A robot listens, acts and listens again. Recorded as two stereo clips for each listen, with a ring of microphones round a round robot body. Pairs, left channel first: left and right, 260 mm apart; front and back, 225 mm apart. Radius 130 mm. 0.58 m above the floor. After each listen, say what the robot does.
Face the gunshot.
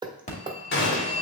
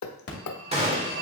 Turn 125° left.
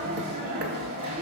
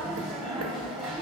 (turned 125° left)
Facing where the gunshot came from. I can't hear it now.